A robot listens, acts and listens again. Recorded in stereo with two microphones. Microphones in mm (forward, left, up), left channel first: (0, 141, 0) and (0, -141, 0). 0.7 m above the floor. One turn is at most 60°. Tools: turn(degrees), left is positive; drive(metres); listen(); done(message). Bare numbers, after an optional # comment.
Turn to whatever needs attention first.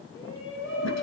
# The shout: about 50° left or 130° left.
turn(50)
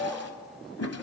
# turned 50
done("Facing the shout.")